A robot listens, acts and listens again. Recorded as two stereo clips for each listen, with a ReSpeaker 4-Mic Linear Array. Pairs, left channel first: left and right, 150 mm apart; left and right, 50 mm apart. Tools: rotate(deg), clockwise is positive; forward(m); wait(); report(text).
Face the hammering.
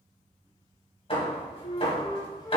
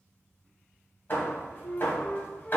rotate(-40)
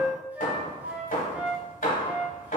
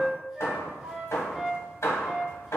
rotate(-95)
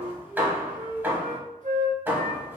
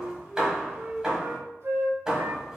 rotate(15)
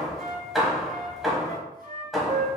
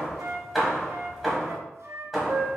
report("Facing the hammering, 1 to 2 m away.")